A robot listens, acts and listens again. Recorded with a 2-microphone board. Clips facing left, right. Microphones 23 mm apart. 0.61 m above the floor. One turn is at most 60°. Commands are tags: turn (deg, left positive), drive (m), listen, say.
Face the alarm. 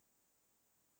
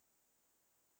<listen/>
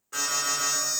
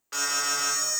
<turn deg="-60"/>
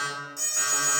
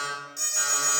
<turn deg="-25"/>
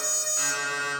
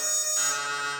<turn deg="-15"/>
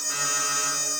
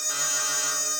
<say>Facing the alarm.</say>